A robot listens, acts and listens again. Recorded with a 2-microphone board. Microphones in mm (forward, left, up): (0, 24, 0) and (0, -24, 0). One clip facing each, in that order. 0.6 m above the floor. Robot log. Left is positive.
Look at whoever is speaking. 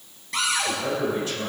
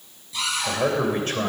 note: The man speaking: about 50° right or 130° right.
cmd yaw -50
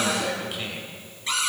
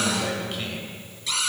note: So it is at 10° left.
cmd yaw +10
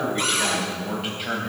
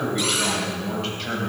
note: The man speaking is now 10° left.
cmd yaw +10
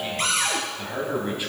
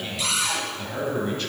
note: The man speaking is now 15° left.
cmd yaw +15
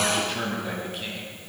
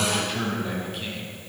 end: Facing the man speaking.